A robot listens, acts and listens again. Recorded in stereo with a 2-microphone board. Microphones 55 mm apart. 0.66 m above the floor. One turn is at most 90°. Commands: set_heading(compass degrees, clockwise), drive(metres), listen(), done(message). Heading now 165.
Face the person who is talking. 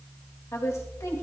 set_heading(105)
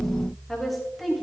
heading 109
done("Found it: a woman speaking, straight ahead, 2 to 4 m away.")